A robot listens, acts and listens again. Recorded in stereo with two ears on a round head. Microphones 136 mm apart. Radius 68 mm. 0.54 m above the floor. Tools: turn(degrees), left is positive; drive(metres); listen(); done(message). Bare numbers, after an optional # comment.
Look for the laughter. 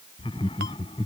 # The laughter: about 35° left or 145° left.
turn(35)
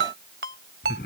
# So it is at 110° left.
turn(110)
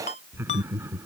# The laughter is now 15° right.
turn(-15)
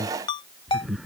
done("Facing the laughter.")